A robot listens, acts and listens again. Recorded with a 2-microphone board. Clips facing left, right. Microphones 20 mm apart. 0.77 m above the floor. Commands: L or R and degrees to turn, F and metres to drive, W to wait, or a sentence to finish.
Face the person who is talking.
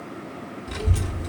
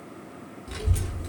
L30
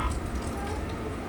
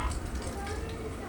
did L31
R30
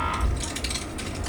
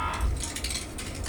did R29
Found it: a child speaking, straight ahead.